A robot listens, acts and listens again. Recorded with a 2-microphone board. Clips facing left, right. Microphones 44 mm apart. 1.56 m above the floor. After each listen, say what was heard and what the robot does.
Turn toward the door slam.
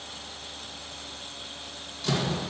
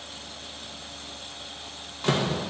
The door slam: about 40° right or 140° right. Turn 40° right.
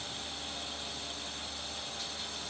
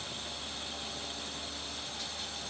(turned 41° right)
Keep listening.
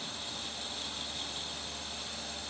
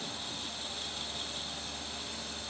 I heard a door slam, but can't make it out now. It was about 5° left or 100° right.